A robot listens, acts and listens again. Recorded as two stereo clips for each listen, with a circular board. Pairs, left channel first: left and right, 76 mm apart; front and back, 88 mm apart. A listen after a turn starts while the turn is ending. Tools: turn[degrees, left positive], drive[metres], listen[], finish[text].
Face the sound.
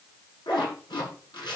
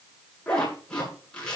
Thought: The zipper: 80° left.
Action: turn[80]
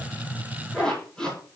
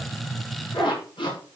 Thought: The zipper is now 10° left.
Action: turn[10]
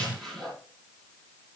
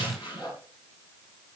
Action: finish[Facing the zipper.]